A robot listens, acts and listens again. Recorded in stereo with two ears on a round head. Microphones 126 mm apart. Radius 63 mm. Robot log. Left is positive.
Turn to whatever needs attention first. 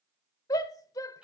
note: The shout: about 25° left or 155° left.
cmd yaw +25
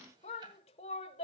note: So it is at 125° left.
cmd yaw +125
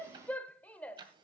note: The shout is now 10° left.
cmd yaw +10
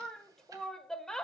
end: Facing the shout, 1 to 2 m away.